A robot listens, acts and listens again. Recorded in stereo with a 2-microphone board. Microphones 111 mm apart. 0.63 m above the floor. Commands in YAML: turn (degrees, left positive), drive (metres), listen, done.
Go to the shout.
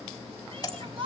turn: -55
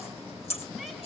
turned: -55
listen: true
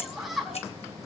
drive: 1.0
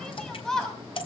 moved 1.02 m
drive: 1.0
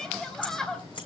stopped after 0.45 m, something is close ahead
done: "Blocked. The shout is further on, straight ahead."